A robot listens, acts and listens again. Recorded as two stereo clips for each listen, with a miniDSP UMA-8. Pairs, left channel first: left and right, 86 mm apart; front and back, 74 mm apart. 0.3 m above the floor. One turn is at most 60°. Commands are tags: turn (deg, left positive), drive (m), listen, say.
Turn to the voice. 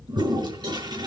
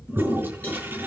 <listen/>
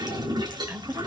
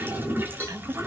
<turn deg="-60"/>
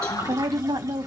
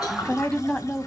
<turn deg="-60"/>
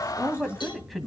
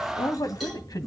<say>Found it: a woman speaking, straight ahead, 1 to 2 m away.</say>